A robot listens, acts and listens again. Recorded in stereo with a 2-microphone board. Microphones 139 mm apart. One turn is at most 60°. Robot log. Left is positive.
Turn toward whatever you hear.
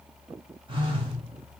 note: The phone buzzing: about 40° right or 140° right.
cmd yaw -40
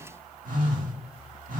note: So it is at 100° right.
cmd yaw -60
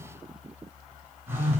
note: The phone buzzing is now 15° right.
cmd yaw -15
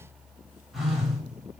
end: Found it: a phone buzzing, straight ahead.